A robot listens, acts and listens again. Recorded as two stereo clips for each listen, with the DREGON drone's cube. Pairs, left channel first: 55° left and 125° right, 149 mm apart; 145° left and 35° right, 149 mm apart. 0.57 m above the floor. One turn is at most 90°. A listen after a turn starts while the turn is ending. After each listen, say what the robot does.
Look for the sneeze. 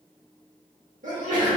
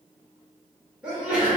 Turn 90° right.
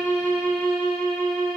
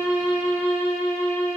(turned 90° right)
Turn 30° right.
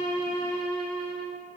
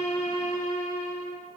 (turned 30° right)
I heard a sneeze from this way, but can't make it out now.